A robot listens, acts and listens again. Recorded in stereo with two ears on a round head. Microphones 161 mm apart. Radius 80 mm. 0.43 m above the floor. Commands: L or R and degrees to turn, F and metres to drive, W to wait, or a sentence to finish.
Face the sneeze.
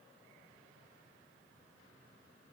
W
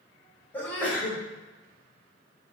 L30
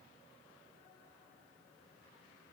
W
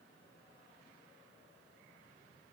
I heard a sneeze, but can't make it out now. It was about 20° right or 140° left.